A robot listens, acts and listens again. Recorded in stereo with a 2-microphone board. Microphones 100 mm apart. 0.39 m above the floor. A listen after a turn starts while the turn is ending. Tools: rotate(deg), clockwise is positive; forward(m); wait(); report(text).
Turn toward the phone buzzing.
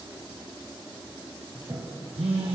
rotate(90)
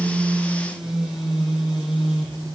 report("Facing the phone buzzing, 2 to 4 m away.")